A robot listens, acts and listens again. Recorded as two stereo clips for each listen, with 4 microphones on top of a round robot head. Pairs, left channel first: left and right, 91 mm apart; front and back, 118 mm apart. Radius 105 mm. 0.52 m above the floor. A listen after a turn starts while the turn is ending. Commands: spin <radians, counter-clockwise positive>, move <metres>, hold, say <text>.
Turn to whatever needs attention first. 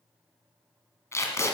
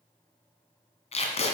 hold
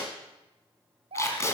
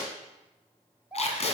spin -1.66
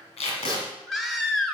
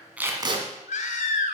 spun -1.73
say Found it: a baby crying, straight ahead, 1 to 2 m away.